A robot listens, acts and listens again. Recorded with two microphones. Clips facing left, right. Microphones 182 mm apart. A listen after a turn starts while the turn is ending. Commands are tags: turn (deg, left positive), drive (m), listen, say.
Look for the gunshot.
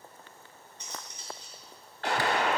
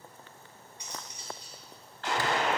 <turn deg="65"/>
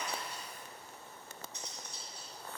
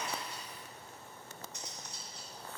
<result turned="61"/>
<listen/>
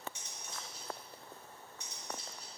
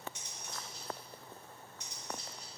<say>I heard a gunshot, but can't make it out now. It was about straight ahead or 55° left.</say>